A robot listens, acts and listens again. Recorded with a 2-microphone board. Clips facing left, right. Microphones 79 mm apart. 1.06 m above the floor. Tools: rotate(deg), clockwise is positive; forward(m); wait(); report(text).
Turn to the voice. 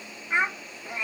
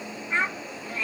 rotate(-30)
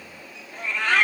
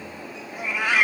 wait()
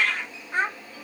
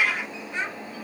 rotate(-135)
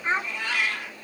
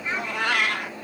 rotate(-35)
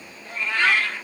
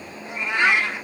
wait()
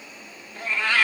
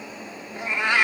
wait()
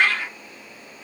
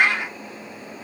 report("I heard a child speaking from this way, but can't make it out now.")